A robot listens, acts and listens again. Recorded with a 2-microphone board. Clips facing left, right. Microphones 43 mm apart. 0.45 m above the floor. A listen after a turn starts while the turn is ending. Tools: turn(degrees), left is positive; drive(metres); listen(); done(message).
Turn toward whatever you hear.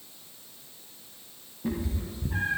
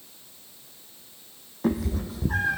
turn(degrees=-90)
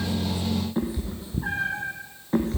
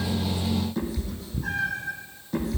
turn(degrees=40)
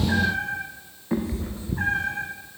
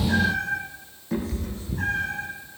turn(degrees=30)
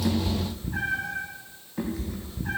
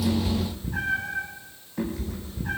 done("Found it: a cat meowing, straight ahead, 2 to 4 m away.")